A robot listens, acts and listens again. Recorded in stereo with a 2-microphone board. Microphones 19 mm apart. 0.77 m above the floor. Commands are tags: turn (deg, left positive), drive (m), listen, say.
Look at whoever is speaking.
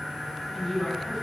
<turn deg="25"/>
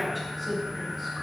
<say>Facing the woman speaking.</say>